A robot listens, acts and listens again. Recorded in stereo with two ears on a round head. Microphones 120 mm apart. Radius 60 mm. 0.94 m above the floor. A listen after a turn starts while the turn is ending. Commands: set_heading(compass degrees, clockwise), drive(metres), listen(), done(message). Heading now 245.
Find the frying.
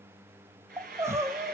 set_heading(335)
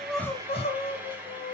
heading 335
set_heading(350)
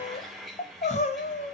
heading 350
done("Facing the frying.")